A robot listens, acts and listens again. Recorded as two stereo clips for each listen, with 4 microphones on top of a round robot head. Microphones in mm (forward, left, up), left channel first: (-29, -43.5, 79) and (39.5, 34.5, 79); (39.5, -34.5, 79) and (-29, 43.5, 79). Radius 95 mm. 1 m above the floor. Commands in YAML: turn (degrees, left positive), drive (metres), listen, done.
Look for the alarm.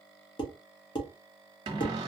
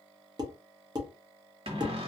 listen: true
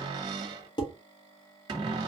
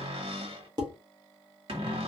listen: true
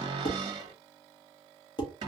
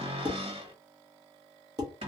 done: "I can't make out an alarm to turn to."